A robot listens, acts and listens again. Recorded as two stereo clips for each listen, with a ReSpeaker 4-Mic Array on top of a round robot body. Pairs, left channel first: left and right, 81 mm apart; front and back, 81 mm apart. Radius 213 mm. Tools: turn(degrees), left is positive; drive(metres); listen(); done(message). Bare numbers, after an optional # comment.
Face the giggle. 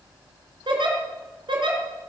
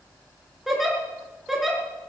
# The giggle: 95° right.
turn(-95)
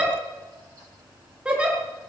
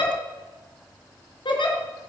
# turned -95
# The giggle is now 10° right.
turn(-10)
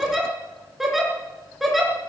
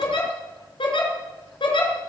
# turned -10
done("Facing the giggle.")